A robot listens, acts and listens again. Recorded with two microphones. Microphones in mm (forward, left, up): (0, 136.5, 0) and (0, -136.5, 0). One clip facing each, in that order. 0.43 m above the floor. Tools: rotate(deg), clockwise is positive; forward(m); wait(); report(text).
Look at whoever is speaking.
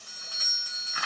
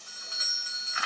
wait()
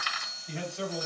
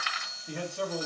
rotate(55)
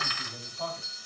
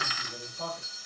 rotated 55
rotate(60)
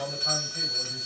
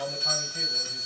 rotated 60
rotate(-15)
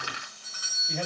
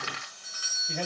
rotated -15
report("Found it: a man speaking, straight ahead, 2 to 4 m away.")